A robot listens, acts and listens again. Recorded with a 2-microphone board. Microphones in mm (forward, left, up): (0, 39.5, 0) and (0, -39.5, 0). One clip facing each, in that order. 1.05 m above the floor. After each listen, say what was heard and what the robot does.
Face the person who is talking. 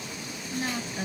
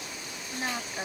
The woman speaking: about 20° right or 160° right. Turn 20° right.
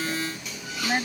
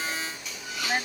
Found it: a woman speaking, straight ahead.